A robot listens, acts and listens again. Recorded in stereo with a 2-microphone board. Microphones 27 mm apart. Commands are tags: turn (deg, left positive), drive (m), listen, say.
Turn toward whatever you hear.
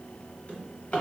<turn deg="45"/>
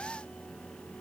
<listen/>
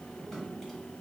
<turn deg="15"/>
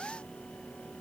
<listen/>
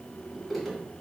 <say>Found it: a drawer, straight ahead, under 1 m away.</say>